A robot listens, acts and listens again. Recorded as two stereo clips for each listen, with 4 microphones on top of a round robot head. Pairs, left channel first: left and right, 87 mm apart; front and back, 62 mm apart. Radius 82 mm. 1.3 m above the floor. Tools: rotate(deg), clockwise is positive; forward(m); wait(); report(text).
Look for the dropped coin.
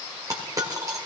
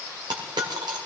rotate(150)
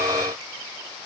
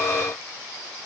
report("Facing where the dropped coin came from. I can't hear it now.")